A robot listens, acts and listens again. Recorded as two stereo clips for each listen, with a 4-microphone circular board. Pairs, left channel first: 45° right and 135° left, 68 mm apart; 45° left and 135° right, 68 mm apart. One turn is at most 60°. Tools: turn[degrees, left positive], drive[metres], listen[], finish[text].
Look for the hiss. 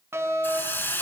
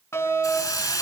Thought: The hiss: 15° left.
Action: turn[15]
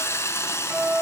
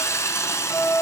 Action: finish[Facing the hiss, 1 to 2 m away.]